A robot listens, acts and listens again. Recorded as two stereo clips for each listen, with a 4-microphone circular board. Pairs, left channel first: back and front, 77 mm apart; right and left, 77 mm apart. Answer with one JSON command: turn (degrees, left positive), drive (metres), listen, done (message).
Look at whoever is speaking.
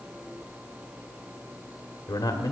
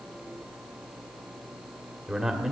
{"turn": 170}
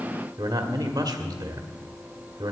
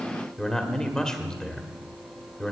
{"turn": -10}
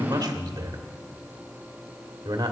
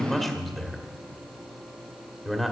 {"done": "Facing the man speaking."}